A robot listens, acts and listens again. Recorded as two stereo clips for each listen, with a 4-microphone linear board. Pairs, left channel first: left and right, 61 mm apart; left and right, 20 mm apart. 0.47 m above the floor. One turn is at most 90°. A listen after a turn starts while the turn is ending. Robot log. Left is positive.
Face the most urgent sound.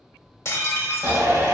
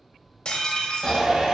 note: The shout: about 60° right or 120° right.
cmd yaw -60
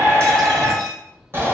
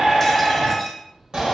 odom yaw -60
note: So it is at 45° right.
cmd yaw -45
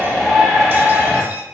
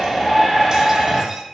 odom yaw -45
end: Facing the shout.